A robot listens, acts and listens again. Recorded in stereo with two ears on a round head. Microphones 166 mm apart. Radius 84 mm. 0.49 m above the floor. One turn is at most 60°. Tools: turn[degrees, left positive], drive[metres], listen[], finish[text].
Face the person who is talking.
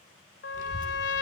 Thought: The child speaking: about 40° left or 140° left.
Action: turn[40]
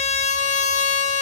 Action: listen[]
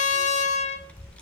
Thought: So it is at 10° left.
Action: turn[10]
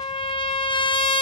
Action: listen[]
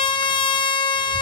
Action: listen[]
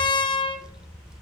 Action: finish[Facing the child speaking, under 1 m away.]